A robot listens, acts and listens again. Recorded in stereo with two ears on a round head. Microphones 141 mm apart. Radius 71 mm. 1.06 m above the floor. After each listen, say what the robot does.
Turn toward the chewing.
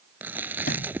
Turn 30° right.
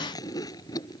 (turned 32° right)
Turn 25° left.
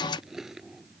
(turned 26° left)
Found it: chewing, straight ahead.